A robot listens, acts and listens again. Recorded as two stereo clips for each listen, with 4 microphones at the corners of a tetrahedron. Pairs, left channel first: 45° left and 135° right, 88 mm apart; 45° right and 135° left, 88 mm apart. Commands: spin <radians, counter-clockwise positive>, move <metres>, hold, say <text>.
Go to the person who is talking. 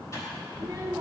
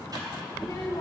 spin -1.48
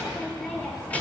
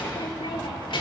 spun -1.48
spin -0.52
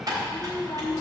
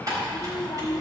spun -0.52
move 1.0
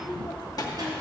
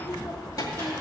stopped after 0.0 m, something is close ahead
say Blocked. The child speaking is further on, straight ahead.